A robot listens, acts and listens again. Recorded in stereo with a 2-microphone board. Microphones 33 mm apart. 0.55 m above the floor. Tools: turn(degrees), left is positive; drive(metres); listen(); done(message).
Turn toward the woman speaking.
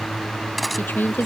turn(degrees=70)
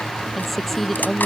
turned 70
turn(degrees=10)
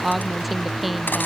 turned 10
done("Facing the woman speaking.")